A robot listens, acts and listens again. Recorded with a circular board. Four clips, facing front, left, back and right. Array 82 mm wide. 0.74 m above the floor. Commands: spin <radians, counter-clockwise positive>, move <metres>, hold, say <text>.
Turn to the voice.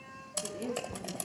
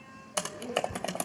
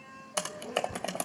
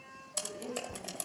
say Facing the woman speaking.